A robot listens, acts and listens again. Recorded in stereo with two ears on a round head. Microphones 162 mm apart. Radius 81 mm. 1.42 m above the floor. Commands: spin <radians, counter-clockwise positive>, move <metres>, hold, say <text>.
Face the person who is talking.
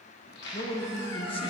spin 0.52
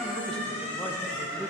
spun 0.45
hold
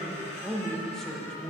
say Found it: a man speaking, straight ahead, under 1 m away.